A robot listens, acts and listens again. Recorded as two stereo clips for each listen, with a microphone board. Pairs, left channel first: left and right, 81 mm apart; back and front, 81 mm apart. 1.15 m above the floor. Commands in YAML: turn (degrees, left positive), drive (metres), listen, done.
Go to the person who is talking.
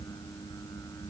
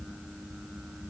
listen: true
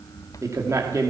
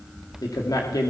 turn: -140
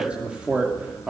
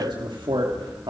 turn: -15
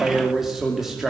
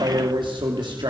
drive: 1.0
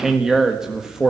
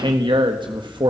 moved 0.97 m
drive: 1.0
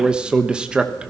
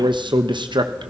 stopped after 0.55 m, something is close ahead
turn: -10
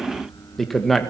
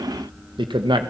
done: "I am next to the man speaking."